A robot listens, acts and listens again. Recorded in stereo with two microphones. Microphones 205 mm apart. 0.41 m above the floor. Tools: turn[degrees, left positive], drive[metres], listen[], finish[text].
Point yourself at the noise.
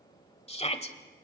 Thought: The shout: about 30° left or 150° left.
Action: turn[30]
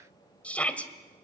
Thought: So it is at 10° left.
Action: turn[10]
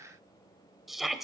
Action: finish[Facing the shout.]